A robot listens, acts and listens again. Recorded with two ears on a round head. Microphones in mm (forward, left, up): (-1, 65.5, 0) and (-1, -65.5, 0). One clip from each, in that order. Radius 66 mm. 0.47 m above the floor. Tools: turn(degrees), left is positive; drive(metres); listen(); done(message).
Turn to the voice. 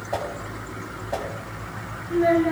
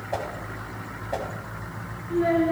turn(degrees=20)
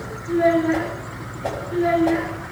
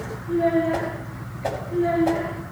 turn(degrees=140)
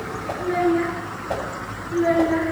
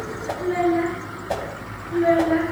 done("Facing the child speaking.")